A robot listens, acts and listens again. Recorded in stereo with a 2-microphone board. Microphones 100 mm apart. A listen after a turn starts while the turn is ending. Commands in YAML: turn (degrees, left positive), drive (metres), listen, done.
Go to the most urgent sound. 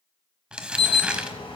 turn: 65
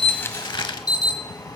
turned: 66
turn: 45
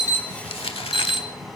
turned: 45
drive: 1.0
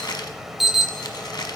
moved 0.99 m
drive: 1.0
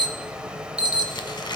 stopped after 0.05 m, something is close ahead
turn: -10
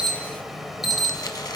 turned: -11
done: "Arrived at the alarm, straight ahead."